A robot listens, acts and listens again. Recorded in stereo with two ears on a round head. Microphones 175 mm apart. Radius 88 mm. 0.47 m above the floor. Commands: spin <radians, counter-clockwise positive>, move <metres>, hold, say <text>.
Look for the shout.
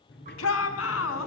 spin 1.57
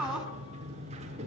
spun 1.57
say Found it: a shout, straight ahead, over 4 m away.